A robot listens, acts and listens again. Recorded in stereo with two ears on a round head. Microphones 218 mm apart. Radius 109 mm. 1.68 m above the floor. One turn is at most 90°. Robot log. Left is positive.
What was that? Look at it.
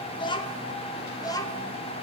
note: The child speaking: about 15° left or 165° left.
cmd yaw +15
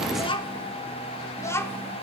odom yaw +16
cmd yaw +30
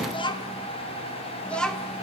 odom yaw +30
cmd yaw +30
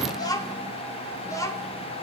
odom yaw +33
note: The child speaking: about 15° left or 165° left.
cmd yaw +15
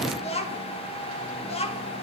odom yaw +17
note: The child speaking: about 30° left or 150° left.
cmd yaw +30
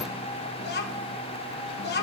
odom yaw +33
note: So it is at 130° left.
cmd yaw +90
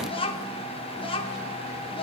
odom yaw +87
note: The child speaking is now 25° left.
cmd yaw +25
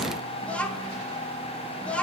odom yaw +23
end: Facing the child speaking, 1 to 2 m away.